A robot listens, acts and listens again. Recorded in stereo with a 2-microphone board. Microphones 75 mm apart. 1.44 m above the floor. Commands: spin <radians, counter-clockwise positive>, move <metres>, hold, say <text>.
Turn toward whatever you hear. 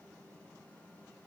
hold
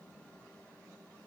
hold
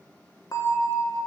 spin 0.87
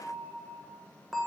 say Facing the bell, 1 to 2 m away.